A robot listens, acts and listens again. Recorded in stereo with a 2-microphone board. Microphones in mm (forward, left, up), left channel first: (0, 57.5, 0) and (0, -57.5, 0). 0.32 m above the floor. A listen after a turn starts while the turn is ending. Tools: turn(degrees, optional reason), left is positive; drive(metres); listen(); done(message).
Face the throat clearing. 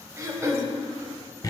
turn(degrees=-25, reason="The throat clearing: about 25° right or 155° right.")
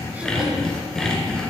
listen()
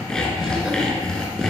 listen()
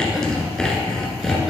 done("I heard throat clearing, but can't make it out now. It was about straight ahead or 130° right.")